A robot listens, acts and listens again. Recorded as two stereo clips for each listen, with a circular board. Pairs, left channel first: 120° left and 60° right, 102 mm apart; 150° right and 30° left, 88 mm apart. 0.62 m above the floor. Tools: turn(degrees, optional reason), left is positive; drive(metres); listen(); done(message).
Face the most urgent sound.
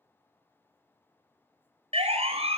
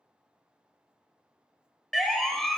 turn(degrees=-65, reason="The siren: 65° right.")
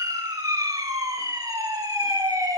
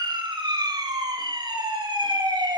done("Found it: a siren, straight ahead.")